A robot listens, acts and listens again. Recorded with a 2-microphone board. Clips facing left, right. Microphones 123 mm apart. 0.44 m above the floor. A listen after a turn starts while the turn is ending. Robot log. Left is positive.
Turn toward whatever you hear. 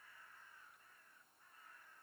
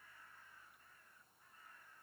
cmd idle
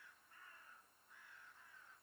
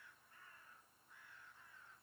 cmd idle
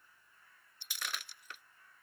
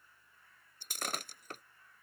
note: The breaking glass: about 50° right or 130° right.
cmd yaw -50
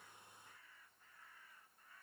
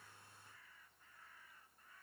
cmd idle
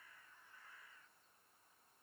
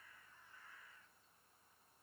end: I heard breaking glass, but can't make it out now. It was about straight ahead or 80° right.